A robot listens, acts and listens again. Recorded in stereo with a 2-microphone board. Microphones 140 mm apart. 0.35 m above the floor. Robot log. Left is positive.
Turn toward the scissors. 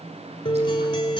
cmd idle
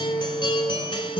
cmd idle
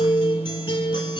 end: I can't make out scissors to turn to.